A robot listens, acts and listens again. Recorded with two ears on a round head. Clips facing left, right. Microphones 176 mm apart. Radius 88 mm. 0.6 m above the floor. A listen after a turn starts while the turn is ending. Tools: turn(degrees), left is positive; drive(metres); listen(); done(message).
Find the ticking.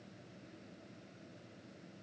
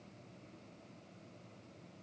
listen()
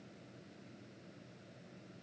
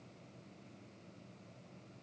listen()
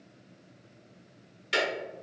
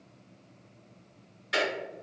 turn(degrees=40)
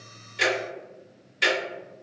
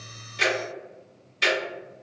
done("Found it: ticking, straight ahead, 1 to 2 m away.")